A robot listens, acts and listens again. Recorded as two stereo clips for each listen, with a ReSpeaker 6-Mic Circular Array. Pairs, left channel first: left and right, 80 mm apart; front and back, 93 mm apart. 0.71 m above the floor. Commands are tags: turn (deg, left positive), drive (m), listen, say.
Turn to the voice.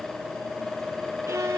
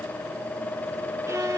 <listen/>
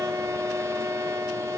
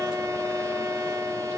<listen/>
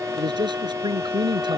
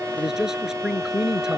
<turn deg="-95"/>
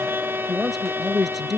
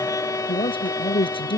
<say>Found it: a man speaking, straight ahead.</say>